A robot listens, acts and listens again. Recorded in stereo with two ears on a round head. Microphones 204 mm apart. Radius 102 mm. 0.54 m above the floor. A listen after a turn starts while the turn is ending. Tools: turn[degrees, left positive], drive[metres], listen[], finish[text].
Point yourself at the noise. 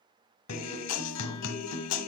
Thought: The guitar: about 75° left or 105° left.
Action: turn[75]
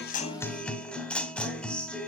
Action: finish[Found it: a guitar, straight ahead, under 1 m away.]